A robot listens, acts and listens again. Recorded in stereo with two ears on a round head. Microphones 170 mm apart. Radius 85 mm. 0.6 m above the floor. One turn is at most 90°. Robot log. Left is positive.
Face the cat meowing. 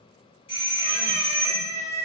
note: The cat meowing: about 20° right or 160° right.
cmd yaw -20
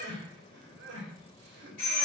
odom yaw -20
cmd idle
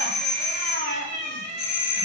note: So it is at 140° right.
cmd yaw -90
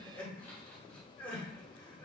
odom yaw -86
note: Nothing new. It was at 55° right.
cmd yaw -55
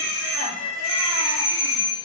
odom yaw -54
end: Facing the cat meowing.